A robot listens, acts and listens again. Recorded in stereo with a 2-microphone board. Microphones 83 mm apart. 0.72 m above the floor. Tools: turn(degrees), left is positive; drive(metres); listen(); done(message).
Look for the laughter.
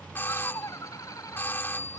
turn(degrees=50)
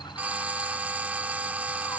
listen()
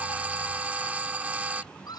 turn(degrees=55)
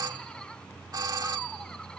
listen()
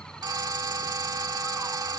listen()
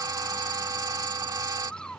turn(degrees=10)
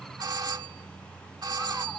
listen()
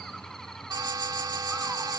listen()
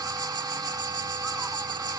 done("I heard laughter from this way, but can't make it out now.")